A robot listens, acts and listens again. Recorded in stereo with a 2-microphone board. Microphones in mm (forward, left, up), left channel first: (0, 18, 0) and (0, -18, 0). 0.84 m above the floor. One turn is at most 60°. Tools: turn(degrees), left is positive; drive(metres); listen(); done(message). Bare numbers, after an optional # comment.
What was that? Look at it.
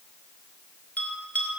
# The bell: about 40° left or 140° left.
turn(40)
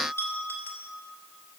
# So it is at 100° left.
turn(60)
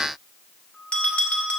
# The bell is now 40° left.
turn(40)
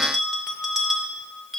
done("Facing the bell, 2 to 4 m away.")